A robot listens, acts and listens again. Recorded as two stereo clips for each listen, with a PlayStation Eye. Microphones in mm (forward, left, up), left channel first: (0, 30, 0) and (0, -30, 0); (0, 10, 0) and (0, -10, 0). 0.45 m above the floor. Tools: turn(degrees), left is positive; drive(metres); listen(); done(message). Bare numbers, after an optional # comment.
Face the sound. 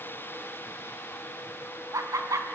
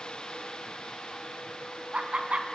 turn(-90)
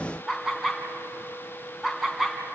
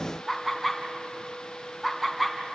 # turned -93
done("Facing the laughter.")